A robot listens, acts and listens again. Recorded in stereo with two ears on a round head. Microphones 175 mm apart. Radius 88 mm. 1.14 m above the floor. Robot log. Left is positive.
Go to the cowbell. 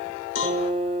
note: The cowbell: about 65° left or 115° left.
cmd yaw +65
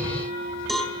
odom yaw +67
cmd fwd 1.0
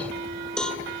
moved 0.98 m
cmd fwd 1.0
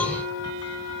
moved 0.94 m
cmd idle
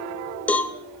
note: The cowbell is now 10° left.
cmd yaw +10
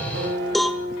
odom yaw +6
cmd fwd 1.0
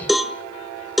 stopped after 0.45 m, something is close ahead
end: I am next to the cowbell.